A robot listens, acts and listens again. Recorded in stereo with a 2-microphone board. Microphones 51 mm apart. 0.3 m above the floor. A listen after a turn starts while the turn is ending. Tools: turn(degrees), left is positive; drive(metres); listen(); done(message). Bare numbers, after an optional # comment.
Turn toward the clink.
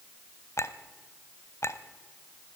# The clink: about 60° left or 120° left.
turn(60)
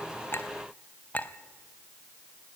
# So it is at 35° left.
turn(35)
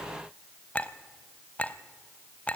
# The clink is now 30° left.
turn(30)
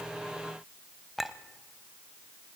done("Facing the clink, under 1 m away.")